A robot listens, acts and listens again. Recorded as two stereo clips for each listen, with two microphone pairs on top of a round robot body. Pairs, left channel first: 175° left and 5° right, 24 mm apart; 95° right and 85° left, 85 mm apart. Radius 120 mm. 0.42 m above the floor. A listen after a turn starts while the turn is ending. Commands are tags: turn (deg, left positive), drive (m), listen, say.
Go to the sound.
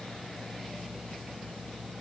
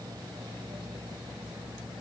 <listen/>
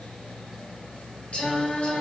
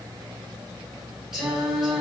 <turn deg="170"/>
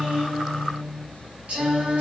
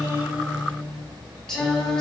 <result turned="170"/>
<turn deg="-15"/>
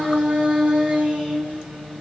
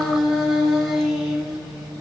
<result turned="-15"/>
<drive m="1.0"/>
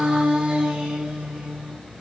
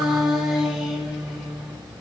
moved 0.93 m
<drive m="1.0"/>
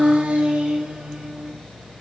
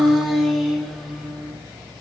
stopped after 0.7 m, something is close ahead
<say>Arrived at the singing, straight ahead.</say>